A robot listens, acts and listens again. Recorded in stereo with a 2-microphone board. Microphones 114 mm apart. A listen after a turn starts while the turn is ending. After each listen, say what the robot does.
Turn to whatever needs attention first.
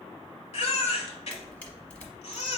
Turn 65° left.
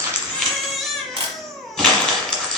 Facing the baby crying, under 1 m away.